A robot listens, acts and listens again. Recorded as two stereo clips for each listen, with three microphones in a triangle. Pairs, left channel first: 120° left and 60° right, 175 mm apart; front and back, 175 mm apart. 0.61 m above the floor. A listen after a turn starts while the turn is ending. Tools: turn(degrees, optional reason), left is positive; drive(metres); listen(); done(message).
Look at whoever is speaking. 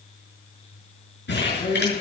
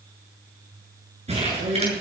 turn(degrees=165, reason="The man speaking: 165° left.")
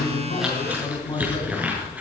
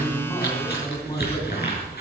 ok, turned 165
turn(degrees=55, reason="The man speaking is now 55° left.")
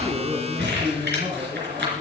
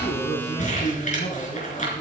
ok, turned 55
turn(degrees=-15, reason="The man speaking is now 15° right.")
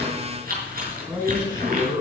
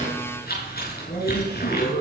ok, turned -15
done("Found it: a man speaking, straight ahead, over 4 m away.")